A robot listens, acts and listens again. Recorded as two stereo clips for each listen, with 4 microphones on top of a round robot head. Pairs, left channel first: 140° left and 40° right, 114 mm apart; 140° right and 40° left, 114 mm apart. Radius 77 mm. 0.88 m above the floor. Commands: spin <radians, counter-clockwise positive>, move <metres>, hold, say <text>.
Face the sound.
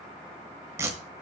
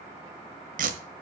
spin 0.52
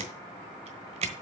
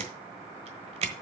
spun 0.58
say Found it: tape being pulled, straight ahead, 1 to 2 m away.